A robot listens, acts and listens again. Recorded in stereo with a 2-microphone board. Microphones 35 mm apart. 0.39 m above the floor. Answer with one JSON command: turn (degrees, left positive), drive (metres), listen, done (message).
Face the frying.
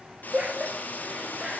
{"turn": 50}
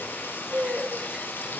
{"turn": 75}
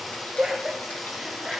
{"done": "Facing the frying."}